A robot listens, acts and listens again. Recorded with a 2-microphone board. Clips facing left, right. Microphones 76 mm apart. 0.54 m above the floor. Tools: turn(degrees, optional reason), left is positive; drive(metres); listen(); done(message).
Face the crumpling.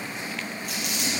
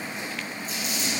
turn(degrees=70, reason="The crumpling: about 70° left or 110° left.")
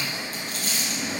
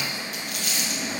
turn(degrees=35, reason="So it is at 35° left.")
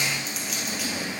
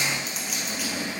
done("Found it: crumpling, straight ahead, 2 to 4 m away.")